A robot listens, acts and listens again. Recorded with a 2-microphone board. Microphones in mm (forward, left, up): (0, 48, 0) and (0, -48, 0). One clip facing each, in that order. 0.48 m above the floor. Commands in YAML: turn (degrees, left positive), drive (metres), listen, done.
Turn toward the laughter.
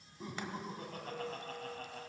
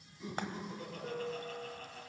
turn: 50
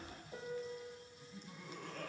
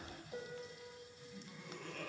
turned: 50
turn: 15
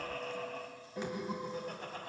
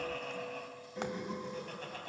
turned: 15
turn: 15
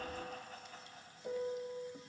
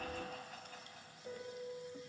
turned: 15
done: "Found it: laughter, straight ahead."